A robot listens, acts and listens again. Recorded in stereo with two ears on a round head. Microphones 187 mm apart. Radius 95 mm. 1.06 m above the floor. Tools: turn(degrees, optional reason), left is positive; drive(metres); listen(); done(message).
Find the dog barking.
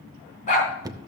turn(degrees=35, reason="The dog barking: about 35° left or 145° left.")
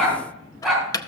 done("Found it: a dog barking, straight ahead, 2 to 4 m away.")